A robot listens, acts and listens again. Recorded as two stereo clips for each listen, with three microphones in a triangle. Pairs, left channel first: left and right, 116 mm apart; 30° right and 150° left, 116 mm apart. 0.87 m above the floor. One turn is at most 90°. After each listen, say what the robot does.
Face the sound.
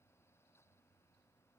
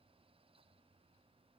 Keep listening.
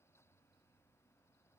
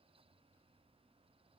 Keep listening.
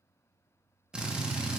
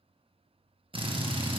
Turn 90° right.
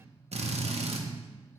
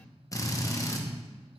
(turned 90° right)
Turn 90° right.
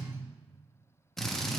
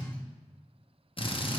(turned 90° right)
Found it: a drill, straight ahead, under 1 m away.